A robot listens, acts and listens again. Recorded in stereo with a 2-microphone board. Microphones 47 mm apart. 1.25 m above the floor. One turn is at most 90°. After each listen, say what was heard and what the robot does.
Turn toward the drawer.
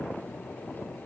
Keep listening.
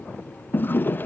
The drawer: about 45° left or 135° left. Turn 45° left.
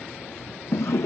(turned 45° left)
So it is at 85° left. Turn 85° left.
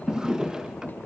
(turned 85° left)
The drawer is now 15° right. Turn 15° right.
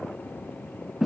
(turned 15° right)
Found it: a drawer, straight ahead, under 1 m away.